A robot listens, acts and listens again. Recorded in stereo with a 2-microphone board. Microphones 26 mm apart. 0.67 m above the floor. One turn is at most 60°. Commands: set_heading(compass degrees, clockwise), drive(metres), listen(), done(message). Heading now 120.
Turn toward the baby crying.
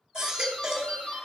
set_heading(145)
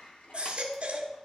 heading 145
set_heading(205)
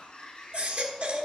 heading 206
set_heading(266)
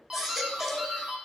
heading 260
set_heading(275)
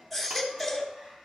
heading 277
done("Found it: a baby crying, straight ahead, 1 to 2 m away.")